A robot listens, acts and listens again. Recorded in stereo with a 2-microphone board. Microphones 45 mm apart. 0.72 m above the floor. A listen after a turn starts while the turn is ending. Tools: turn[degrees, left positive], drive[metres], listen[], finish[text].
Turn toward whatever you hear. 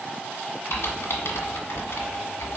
Thought: The typing on a keyboard: about 70° left or 110° left.
Action: turn[70]
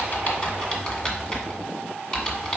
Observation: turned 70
Thought: So it is at 25° left.
Action: turn[25]
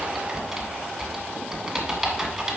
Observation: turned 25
Action: finish[Facing the typing on a keyboard, 1 to 2 m away.]